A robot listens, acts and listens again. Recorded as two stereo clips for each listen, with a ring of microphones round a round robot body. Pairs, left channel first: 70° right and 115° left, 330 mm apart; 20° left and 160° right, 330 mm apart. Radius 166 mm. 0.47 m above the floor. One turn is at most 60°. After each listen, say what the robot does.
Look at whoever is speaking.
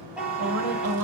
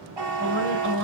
Turn 60° left.
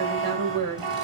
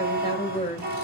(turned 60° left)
Turn 60° left.
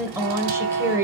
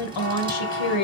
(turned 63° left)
Turn 30° left.
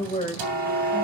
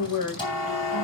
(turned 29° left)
Found it: a woman speaking, straight ahead.